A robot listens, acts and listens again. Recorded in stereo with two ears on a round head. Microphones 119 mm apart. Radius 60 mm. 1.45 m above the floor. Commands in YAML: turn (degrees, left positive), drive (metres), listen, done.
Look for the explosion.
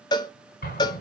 turn: 90
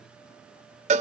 done: "Facing where the explosion came from. I can't hear it now."